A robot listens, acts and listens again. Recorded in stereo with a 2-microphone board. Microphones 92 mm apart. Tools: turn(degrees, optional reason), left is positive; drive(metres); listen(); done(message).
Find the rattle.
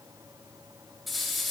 turn(degrees=30)
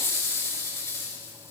turn(degrees=150, reason="So it is at 150° left.")
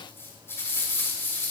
turn(degrees=25, reason="The rattle is now 25° left.")
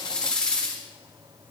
turn(degrees=10, reason="The rattle is now 10° left.")
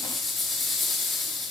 done("Facing the rattle, over 4 m away.")